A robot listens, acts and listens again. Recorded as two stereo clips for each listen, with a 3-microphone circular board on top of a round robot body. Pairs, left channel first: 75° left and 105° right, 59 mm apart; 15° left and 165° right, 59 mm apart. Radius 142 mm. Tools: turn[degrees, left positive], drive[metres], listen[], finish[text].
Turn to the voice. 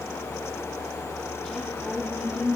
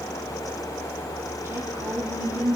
Thought: The woman speaking: 160° left.
Action: turn[160]
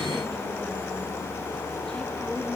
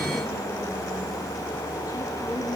Action: listen[]
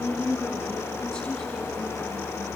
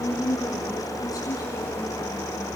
Action: finish[Found it: a woman speaking, straight ahead, over 4 m away.]